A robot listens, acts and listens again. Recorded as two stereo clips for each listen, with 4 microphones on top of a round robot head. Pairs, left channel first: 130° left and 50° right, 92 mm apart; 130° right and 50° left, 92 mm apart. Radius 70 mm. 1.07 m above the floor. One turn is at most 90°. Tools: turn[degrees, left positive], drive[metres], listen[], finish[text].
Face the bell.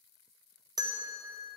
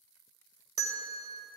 Action: finish[Facing the bell.]